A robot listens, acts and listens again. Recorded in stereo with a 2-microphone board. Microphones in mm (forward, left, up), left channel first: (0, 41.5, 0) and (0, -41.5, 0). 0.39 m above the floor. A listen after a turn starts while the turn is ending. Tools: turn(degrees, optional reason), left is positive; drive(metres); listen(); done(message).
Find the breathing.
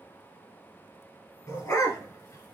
listen()
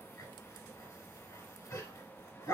listen()
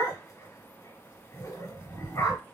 done("I can't make out breathing, only a dog barking.")